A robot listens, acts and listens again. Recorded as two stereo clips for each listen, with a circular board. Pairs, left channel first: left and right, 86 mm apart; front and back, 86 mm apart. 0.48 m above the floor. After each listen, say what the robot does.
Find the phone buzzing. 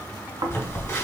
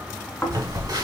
Turn 145° left.
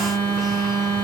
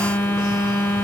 Turn 40° left.
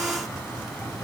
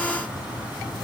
Keep listening.
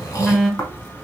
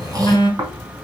Found it: a phone buzzing, straight ahead, 1 to 2 m away.